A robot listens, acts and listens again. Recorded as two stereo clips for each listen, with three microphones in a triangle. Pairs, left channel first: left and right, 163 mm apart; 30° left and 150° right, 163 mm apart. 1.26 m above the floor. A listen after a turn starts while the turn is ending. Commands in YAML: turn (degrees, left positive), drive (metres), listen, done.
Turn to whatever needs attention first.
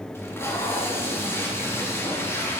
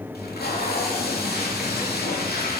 listen: true
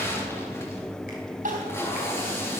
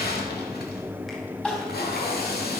turn: -55
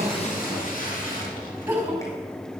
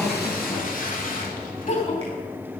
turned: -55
turn: -15
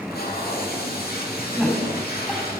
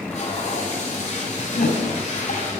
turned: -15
done: "Found it: crying, straight ahead, 2 to 4 m away."